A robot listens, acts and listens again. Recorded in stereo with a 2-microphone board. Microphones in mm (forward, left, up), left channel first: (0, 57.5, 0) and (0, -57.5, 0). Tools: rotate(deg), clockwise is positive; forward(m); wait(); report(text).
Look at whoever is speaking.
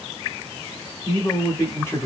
rotate(-20)
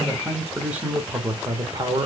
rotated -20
rotate(35)
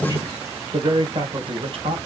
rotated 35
rotate(55)
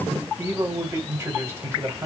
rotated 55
rotate(25)
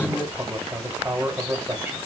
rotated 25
rotate(15)
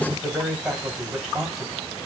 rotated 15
report("Facing the man speaking.")